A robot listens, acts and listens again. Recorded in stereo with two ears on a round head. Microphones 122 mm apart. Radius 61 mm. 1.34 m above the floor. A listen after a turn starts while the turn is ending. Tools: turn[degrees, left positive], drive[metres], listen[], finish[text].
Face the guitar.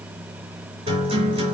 Thought: The guitar: about 40° right or 140° right.
Action: turn[-40]
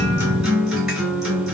Action: finish[Found it: a guitar, straight ahead, 2 to 4 m away.]